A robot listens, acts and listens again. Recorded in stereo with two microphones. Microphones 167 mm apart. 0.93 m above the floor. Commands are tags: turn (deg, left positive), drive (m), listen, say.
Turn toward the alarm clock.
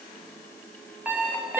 <turn deg="-30"/>
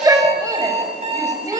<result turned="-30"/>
<turn deg="-140"/>
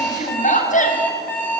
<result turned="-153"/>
<turn deg="10"/>
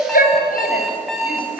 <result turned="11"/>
<say>Facing the alarm clock.</say>